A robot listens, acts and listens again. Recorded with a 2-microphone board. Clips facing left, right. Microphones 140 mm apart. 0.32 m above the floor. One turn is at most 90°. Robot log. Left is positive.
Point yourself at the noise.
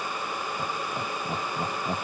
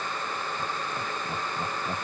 note: The laughter: about 25° left or 155° left.
cmd yaw +25
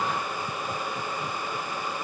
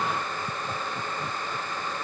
end: Found it: laughter, straight ahead.